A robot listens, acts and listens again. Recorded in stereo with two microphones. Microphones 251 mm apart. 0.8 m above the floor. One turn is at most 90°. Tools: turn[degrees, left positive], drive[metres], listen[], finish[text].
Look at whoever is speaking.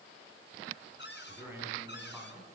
Action: turn[-30]
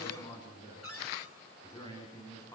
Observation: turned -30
Thought: So it is at 15° left.
Action: turn[15]
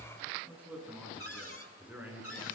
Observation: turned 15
Action: finish[Facing the man speaking, over 4 m away.]